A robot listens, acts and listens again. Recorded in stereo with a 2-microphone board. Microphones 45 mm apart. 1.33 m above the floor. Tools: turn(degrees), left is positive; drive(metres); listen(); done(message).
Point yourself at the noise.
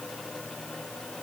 listen()
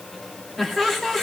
turn(degrees=30)
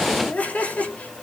turn(degrees=145)
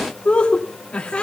turn(degrees=30)
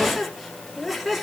done("Found it: laughter, straight ahead.")